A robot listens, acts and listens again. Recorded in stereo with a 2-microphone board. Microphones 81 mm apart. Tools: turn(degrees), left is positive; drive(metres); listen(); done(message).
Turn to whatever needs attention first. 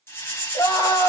turn(degrees=65)
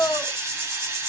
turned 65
turn(degrees=50)
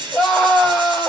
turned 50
done("Facing the scream, 1 to 2 m away.")